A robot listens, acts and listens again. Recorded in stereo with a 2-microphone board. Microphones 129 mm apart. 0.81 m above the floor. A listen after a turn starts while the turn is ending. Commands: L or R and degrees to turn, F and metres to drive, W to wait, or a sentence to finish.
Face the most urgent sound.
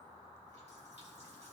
W
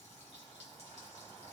W
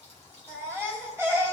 R20
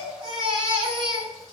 R140
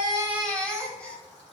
L10
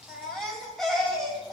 Facing the baby crying, 2 to 4 m away.